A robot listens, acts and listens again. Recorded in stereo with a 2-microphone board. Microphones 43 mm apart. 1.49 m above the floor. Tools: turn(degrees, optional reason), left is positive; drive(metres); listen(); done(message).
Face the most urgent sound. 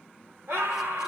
turn(degrees=-90)
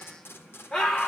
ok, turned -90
turn(degrees=15, reason="So it is at 15° left.")
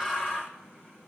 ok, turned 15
done("Facing the scream.")